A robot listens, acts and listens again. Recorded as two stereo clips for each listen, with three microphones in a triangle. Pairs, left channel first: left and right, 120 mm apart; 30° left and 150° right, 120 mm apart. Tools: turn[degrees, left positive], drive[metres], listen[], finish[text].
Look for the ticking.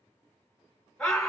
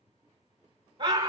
Action: listen[]
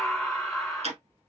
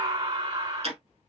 Thought: The ticking: 115° right.
Action: turn[-115]
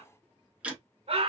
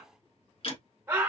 Thought: The ticking is now 10° right.
Action: turn[-10]
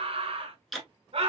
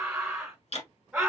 Action: finish[Facing the ticking, 1 to 2 m away.]